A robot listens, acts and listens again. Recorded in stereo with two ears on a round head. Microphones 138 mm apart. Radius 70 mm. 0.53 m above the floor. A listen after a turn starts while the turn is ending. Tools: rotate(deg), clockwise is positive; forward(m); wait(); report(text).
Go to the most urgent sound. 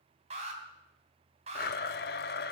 rotate(40)
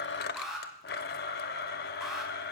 forward(1.0)
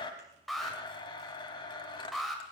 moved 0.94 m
forward(1.0)
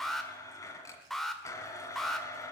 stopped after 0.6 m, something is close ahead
report("Arrived at the alarm, straight ahead.")